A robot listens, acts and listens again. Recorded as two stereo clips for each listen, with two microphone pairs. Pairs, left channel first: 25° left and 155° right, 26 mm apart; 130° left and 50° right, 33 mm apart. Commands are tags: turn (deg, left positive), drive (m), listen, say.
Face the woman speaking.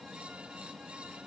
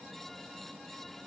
<listen/>
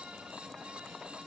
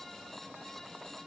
<listen/>
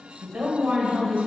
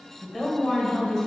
<turn deg="-150"/>
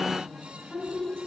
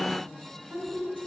<turn deg="-10"/>
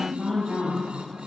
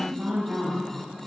<say>Facing the woman speaking, over 4 m away.</say>